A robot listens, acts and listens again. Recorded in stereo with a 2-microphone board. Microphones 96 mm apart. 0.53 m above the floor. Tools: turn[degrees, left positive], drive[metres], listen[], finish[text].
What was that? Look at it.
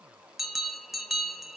Action: turn[30]
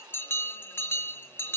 Thought: So it is at 155° left.
Action: turn[155]
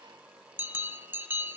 Thought: The bell is now 25° right.
Action: turn[-25]
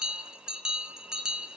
Thought: The bell is now 10° right.
Action: turn[-10]
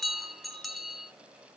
Action: finish[Found it: a bell, straight ahead.]